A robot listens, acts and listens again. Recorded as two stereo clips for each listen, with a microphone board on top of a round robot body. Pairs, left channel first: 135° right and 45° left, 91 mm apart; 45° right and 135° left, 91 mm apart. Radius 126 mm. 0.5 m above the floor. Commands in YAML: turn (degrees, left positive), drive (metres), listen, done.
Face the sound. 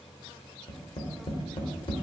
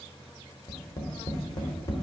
turn: -100
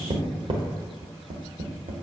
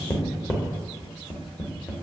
turn: 20
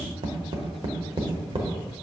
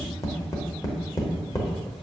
done: "Facing the tapping, 1 to 2 m away."